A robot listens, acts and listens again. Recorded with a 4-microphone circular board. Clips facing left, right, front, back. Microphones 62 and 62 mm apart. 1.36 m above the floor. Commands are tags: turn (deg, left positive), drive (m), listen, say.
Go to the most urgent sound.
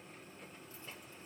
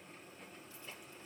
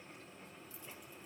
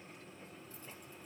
<listen/>
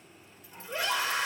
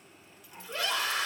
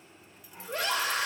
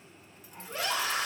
<turn deg="20"/>
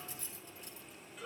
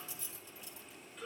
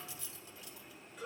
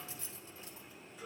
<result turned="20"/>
<drive m="1.0"/>
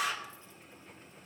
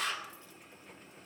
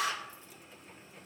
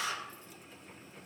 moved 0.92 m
<turn deg="10"/>
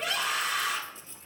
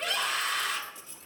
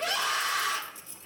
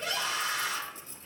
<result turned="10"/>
<drive m="1.0"/>
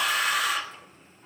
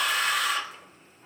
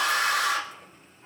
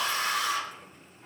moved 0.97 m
<drive m="1.0"/>
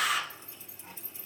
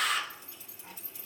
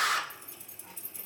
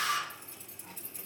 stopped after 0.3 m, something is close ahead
<say>I am next to the scream.</say>